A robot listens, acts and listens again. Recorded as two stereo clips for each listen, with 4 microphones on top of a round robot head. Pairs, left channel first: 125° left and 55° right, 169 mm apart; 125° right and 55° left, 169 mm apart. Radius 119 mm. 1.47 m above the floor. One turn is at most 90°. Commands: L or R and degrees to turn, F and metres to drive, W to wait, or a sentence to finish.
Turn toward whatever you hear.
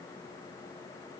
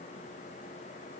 W
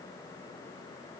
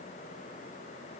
W
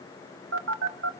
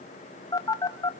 R55
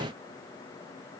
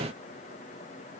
W
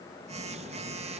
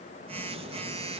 Facing the phone buzzing, 1 to 2 m away.